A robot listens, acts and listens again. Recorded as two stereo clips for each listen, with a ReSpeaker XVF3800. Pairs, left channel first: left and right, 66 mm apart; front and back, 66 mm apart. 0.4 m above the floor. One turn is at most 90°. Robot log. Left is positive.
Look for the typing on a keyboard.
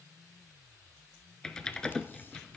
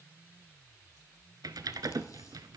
note: The typing on a keyboard: 170° left.
cmd yaw +90
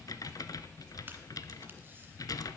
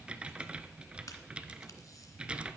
note: The typing on a keyboard is now 105° left.
cmd yaw +90
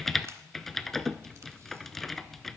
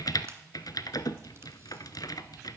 end: Found it: typing on a keyboard, straight ahead, under 1 m away.